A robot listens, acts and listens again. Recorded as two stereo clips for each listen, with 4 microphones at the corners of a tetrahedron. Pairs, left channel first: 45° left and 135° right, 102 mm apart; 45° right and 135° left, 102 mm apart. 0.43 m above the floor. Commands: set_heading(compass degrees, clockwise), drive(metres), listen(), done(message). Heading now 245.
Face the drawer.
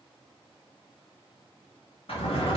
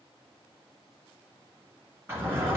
set_heading(180)
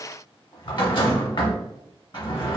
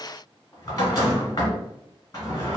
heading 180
done("Found it: a drawer, straight ahead, 1 to 2 m away.")